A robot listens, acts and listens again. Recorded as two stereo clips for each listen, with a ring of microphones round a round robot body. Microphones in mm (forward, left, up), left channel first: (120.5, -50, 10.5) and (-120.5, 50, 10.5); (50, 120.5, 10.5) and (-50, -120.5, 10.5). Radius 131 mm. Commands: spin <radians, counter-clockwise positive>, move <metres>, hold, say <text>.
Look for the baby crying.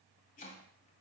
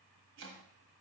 hold
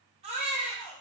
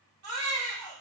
spin -2.36
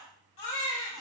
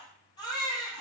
say Found it: a baby crying, straight ahead.